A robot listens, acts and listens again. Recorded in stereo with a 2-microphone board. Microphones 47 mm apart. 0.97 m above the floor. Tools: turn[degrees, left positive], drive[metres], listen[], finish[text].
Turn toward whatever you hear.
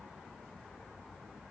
Action: listen[]
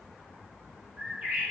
Thought: The bird: about 35° right or 145° right.
Action: turn[-35]
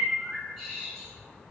Action: finish[Found it: a bird, straight ahead.]